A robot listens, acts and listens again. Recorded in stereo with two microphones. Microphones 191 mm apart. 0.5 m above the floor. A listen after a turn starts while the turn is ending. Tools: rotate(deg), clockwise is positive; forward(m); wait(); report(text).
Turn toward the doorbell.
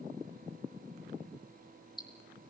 wait()
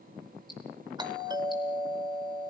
rotate(20)
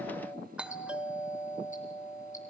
report("Facing the doorbell.")